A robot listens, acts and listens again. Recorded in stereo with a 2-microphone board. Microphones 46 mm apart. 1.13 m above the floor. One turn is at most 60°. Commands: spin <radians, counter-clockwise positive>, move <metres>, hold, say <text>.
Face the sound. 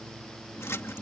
spin 1.05
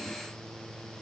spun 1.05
spin 0.52
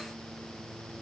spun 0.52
say Facing where the splash came from. I can't hear it now.